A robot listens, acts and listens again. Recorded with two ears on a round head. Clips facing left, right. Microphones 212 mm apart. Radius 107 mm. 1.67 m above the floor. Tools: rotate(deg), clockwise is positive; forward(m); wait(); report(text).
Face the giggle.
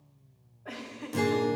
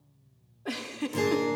rotate(55)
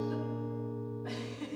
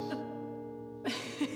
rotate(70)
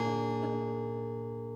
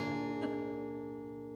wait()
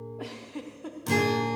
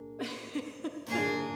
rotate(20)
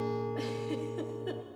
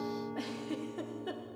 report("Found it: a giggle, straight ahead, 1 to 2 m away.")